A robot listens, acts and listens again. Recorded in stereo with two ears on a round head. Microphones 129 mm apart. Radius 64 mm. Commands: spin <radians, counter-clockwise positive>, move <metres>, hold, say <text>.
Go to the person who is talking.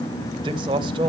spin -0.61
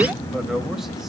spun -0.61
hold
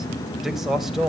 move 1.0
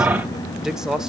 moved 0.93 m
move 1.0
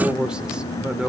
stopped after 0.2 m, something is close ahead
spin -0.17
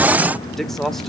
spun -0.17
say Arrived at the man speaking, straight ahead.